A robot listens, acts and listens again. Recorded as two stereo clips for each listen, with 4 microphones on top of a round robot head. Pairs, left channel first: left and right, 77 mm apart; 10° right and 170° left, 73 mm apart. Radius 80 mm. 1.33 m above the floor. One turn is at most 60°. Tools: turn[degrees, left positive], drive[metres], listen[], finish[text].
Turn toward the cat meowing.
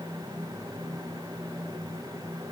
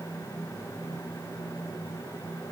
Action: listen[]
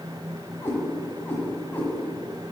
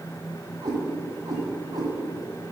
Thought: The cat meowing: 150° left.
Action: turn[60]
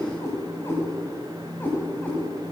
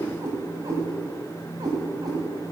Thought: The cat meowing is now 155° left.
Action: turn[60]
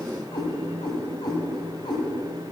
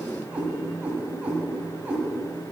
Thought: The cat meowing is now 105° left.
Action: turn[60]
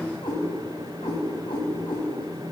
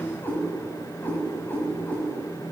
Thought: The cat meowing is now 50° left.
Action: turn[50]
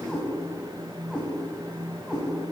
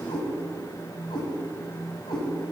Action: finish[Found it: a cat meowing, straight ahead.]